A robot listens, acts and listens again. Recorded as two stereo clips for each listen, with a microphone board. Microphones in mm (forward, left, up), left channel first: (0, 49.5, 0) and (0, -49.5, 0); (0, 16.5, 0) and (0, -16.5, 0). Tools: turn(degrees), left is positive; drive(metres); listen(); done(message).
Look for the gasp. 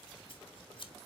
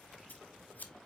listen()
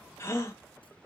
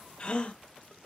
turn(degrees=25)
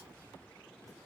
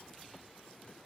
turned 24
listen()
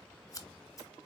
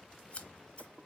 done("I heard a gasp, but can't make it out now. It was about 5° left or 130° left.")